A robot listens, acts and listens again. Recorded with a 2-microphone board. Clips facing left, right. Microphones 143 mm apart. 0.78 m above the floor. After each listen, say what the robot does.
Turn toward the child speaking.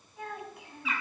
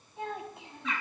Turn 25° right.
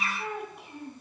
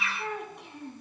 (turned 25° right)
Found it: a child speaking, straight ahead.